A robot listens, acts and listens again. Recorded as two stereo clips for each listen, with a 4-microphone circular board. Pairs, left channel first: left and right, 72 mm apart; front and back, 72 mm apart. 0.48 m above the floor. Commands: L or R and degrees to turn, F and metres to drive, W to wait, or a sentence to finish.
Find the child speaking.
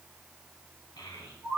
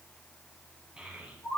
L105
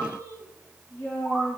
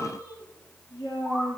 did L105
L30
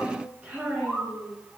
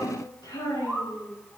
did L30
R20
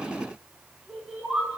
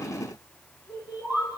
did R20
Found it: a child speaking, straight ahead.